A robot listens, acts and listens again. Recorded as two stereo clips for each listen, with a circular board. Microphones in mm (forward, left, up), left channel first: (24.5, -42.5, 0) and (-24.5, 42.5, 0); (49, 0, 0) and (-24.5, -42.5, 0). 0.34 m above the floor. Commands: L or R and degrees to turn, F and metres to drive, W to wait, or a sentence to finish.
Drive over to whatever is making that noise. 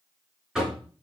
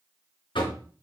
L35
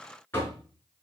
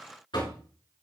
F1.0
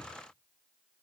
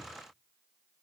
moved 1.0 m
W
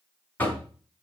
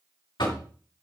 L10
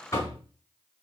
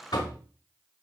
F1.0
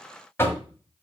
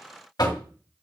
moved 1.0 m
F1.0
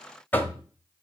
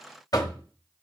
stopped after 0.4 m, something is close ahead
I am next to the knocking.